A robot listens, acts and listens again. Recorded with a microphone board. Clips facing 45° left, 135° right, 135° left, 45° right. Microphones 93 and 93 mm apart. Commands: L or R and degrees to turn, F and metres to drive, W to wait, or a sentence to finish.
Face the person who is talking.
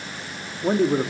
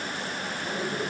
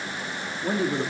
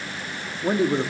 L15
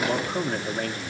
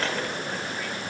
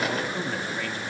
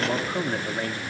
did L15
Found it: a man speaking, straight ahead, 1 to 2 m away.